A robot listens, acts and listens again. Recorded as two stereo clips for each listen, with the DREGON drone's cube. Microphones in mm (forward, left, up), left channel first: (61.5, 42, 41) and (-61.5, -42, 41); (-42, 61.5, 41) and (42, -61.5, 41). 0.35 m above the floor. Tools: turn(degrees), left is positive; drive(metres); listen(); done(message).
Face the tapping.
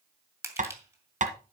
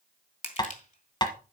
turn(degrees=-175)
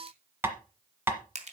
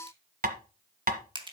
turn(degrees=-70)
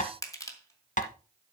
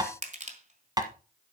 turn(degrees=10)
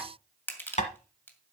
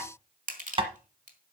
done("Facing the tapping.")